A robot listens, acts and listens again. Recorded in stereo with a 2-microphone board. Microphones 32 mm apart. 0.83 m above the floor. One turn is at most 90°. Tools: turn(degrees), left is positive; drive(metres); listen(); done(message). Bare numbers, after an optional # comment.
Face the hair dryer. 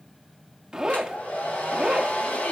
# The hair dryer: about 45° left or 135° left.
turn(45)
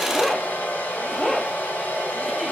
# So it is at 90° left.
turn(90)
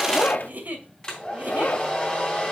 # The hair dryer is now 25° left.
turn(25)
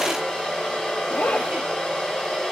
# The hair dryer is now 10° left.
turn(10)
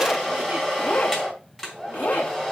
done("Found it: a hair dryer, straight ahead.")